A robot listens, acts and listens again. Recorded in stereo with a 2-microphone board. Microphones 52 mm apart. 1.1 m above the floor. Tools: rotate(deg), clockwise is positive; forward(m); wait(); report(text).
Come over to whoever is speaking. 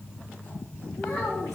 rotate(-75)
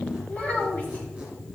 rotate(-30)
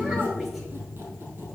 wait()
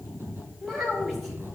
forward(1.0)
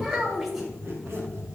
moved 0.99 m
rotate(10)
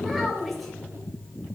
forward(1.0)
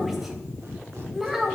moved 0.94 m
forward(1.0)
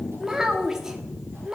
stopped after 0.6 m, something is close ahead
rotate(10)
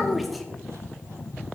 report("Arrived at the child speaking, straight ahead.")